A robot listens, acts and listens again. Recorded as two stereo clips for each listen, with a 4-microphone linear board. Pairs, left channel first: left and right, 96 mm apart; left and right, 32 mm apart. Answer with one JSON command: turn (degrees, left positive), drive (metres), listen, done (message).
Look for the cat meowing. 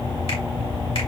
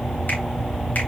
{"listen": true}
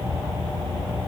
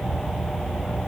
{"listen": true}
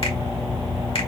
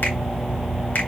{"done": "I can't make out a cat meowing to turn to."}